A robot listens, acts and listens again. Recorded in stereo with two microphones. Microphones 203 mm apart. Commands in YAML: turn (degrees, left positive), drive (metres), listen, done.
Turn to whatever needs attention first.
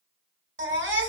turn: -70
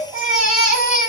done: "Facing the baby crying."